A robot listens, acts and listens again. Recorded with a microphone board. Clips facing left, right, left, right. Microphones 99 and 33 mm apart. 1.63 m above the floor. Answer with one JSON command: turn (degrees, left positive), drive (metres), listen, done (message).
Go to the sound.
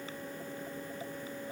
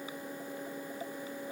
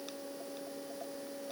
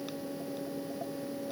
{"listen": true}
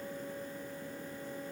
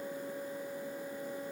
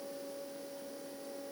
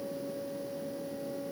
{"listen": true}
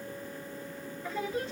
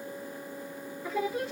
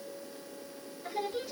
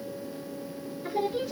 {"turn": -30}
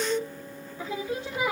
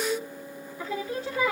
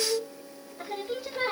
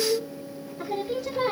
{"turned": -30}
{"turn": 20}
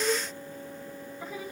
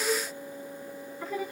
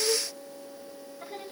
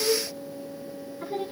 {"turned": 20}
{"drive": 1.0}
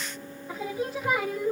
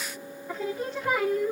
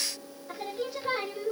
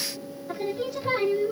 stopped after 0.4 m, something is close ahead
{"done": "Blocked. The singing is further on, straight ahead."}